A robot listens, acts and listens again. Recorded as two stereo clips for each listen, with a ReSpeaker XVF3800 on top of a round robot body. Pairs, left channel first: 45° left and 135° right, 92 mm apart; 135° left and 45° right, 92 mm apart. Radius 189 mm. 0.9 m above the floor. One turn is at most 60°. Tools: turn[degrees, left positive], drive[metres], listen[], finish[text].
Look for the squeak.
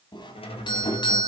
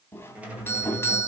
Thought: The squeak: 30° left.
Action: turn[30]
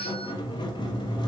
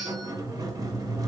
Action: finish[Facing the squeak, 2 to 4 m away.]